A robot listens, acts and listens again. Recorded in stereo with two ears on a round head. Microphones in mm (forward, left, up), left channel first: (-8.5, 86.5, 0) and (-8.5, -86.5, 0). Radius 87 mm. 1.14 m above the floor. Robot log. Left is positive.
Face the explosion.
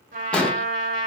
cmd yaw +30
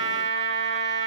cmd idle
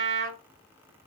end: I heard an explosion, but can't make it out now. It was about 25° right or 145° left.